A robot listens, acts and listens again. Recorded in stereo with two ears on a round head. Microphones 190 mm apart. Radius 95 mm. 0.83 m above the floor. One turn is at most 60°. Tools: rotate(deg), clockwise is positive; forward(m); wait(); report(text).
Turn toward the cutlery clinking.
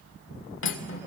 rotate(-60)
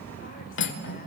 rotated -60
rotate(-60)
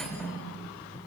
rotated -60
report("Facing the cutlery clinking.")